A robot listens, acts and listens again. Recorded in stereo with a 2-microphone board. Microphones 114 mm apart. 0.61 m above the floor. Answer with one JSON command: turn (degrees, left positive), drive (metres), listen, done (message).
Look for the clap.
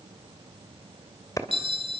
{"turn": 30}
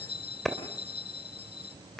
{"done": "Found it: a clap, straight ahead, 2 to 4 m away."}